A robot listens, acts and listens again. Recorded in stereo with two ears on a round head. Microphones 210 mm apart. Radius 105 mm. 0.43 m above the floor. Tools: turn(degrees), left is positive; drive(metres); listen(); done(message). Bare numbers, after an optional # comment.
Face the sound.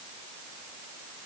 listen()
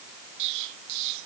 turn(-90)
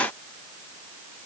done("Facing where the explosion came from. I can't hear it now.")